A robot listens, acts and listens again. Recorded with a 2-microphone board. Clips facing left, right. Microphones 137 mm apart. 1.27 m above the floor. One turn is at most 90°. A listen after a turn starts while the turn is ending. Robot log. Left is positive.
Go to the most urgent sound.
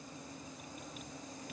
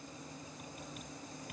cmd idle
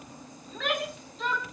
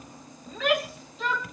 cmd yaw -30
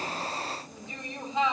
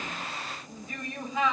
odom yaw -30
note: So it is at 25° left.
cmd yaw +25
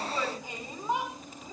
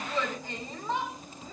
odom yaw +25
note: The shout is now 10° left.
cmd yaw +10
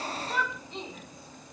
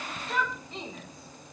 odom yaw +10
cmd fwd 1.0
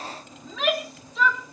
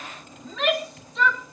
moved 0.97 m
cmd fwd 1.0
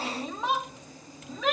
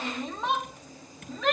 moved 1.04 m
cmd fwd 1.0
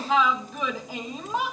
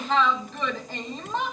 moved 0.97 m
cmd fwd 1.0
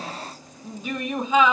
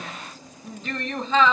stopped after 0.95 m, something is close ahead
note: The shout is now 10° left.
cmd yaw +10
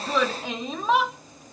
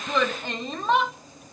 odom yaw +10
end: Arrived at the shout, straight ahead.